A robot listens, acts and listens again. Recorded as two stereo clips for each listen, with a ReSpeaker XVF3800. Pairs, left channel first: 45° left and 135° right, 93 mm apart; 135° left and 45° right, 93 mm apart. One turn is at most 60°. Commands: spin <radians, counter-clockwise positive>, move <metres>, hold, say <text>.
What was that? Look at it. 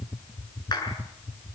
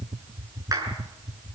say Facing the clap.